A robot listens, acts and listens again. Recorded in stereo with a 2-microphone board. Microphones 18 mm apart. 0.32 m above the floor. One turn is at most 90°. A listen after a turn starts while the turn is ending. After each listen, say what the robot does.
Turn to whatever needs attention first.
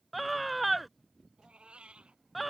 Turn 30° right.
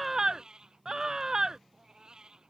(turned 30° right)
Turn 90° right.
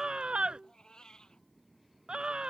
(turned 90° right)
Turn 60° right.
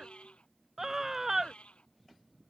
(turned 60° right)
Turn 20° right.
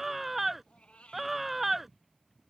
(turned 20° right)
Facing the scream.